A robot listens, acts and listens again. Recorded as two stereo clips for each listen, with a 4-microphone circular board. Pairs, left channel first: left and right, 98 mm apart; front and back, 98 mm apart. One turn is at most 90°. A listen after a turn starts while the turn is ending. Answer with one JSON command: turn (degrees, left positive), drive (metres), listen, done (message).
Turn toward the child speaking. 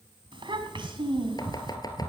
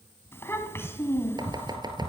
{"turn": -65}
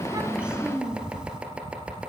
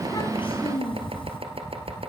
{"turn": -10}
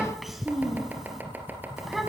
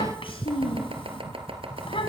{"done": "Facing the child speaking."}